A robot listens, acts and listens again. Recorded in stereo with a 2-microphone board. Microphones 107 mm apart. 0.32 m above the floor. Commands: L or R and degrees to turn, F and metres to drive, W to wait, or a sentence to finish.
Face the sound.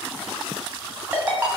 R15
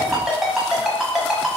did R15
Found it: a ringtone, straight ahead.